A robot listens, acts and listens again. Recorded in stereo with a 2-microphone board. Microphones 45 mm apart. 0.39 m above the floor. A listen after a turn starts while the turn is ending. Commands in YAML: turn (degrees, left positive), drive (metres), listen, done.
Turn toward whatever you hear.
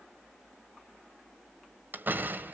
turn: -50
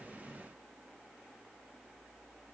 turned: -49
listen: true
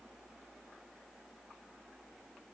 done: "I heard a door slam, but can't make it out now. It was about straight ahead or 85° right."